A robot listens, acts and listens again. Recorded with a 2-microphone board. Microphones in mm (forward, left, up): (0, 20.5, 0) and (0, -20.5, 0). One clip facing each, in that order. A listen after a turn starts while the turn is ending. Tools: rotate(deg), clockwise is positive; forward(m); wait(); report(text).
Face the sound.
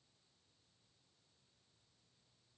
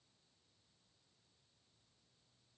wait()
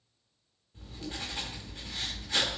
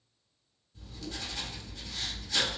rotate(-35)
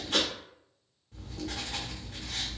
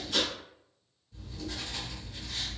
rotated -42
rotate(-100)
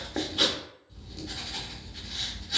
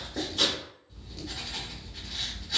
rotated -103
report("Found it: writing, straight ahead, under 1 m away.")